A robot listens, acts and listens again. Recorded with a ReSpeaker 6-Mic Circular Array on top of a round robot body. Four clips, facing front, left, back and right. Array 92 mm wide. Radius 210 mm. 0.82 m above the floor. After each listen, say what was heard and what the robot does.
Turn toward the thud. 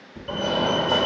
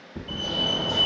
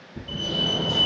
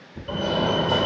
The thud: 80° left. Turn 80° left.
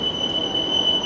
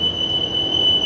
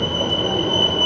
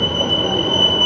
I heard a thud from this way, but can't make it out now.